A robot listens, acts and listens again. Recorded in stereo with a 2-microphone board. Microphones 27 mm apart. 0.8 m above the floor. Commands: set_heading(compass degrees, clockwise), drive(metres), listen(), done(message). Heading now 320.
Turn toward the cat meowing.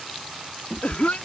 set_heading(295)
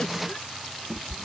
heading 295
done("Facing the cat meowing.")